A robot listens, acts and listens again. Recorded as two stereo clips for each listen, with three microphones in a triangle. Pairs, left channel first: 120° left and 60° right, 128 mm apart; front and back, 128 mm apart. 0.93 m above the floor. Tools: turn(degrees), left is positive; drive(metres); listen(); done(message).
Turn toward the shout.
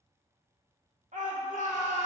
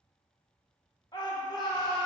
turn(degrees=-55)
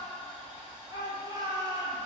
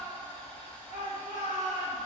done("Found it: a shout, straight ahead.")